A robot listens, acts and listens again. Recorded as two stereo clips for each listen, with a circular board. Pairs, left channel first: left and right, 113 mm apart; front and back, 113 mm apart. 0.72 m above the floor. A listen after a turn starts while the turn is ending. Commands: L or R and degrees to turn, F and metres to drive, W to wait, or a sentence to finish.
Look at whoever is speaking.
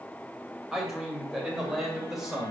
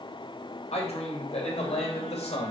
Found it: a man speaking, straight ahead.